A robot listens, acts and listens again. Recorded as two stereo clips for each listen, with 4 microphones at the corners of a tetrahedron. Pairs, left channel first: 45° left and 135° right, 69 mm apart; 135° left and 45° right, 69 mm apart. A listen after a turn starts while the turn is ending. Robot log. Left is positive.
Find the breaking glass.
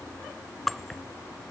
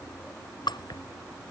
note: The breaking glass: 135° left.
cmd yaw +135
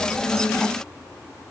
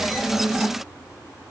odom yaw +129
end: I heard breaking glass from this way, but can't make it out now.